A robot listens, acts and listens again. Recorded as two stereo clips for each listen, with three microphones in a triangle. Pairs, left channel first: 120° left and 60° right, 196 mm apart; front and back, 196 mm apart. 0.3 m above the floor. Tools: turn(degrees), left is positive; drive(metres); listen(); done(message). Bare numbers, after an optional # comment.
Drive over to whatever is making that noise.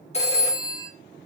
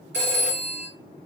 # The phone ringing: 175° left.
turn(175)
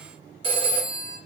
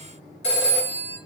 drive(1.0)
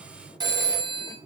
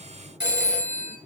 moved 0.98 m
drive(1.0)
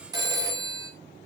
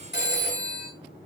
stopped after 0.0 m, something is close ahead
# The phone ringing is now 10° left.
turn(10)
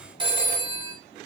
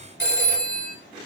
done("I am next to the phone ringing.")